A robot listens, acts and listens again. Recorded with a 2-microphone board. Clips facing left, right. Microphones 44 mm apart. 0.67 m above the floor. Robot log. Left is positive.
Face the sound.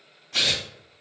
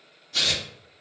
cmd yaw +90
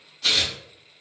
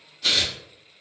end: Facing the tearing paper.